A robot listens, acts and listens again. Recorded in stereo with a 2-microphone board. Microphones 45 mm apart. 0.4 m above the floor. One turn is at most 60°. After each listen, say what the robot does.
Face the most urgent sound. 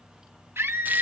Turn 55° right.
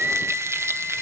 Turn 40° right.
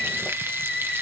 Turn 10° right.
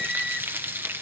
Facing the scream.